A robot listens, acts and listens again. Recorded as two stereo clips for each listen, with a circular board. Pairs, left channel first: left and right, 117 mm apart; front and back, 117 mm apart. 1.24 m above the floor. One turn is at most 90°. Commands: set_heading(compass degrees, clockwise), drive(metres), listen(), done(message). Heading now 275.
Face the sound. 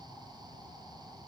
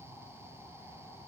listen()
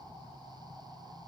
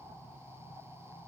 listen()
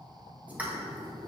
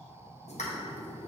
set_heading(290)
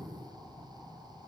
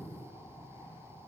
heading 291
done("I heard a pop from this way, but can't make it out now.")